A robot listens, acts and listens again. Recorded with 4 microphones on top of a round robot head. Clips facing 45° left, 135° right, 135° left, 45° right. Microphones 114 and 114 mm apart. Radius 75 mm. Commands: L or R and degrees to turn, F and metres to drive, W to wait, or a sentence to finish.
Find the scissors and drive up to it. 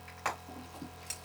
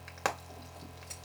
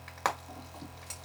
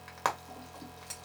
L45
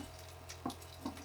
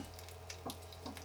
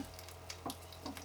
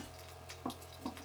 F1.0
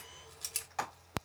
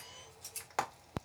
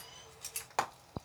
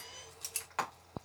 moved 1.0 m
L20
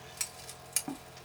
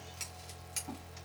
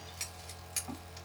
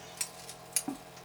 F1.0
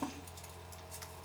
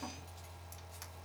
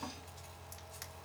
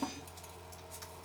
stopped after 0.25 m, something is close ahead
Arrived at the scissors, straight ahead.